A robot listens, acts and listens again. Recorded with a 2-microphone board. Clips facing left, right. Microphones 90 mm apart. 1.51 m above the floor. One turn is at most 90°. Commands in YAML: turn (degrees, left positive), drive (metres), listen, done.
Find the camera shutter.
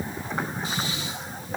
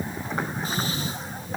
listen: true
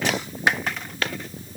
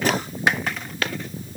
listen: true
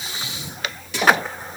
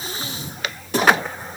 done: "I can't make out a camera shutter, only breathing."